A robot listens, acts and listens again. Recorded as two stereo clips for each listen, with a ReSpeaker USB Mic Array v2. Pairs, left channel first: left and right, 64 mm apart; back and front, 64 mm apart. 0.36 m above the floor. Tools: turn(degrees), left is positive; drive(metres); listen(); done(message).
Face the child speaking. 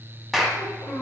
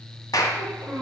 turn(degrees=60)
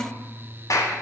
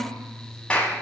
listen()
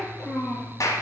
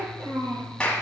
done("Found it: a child speaking, straight ahead.")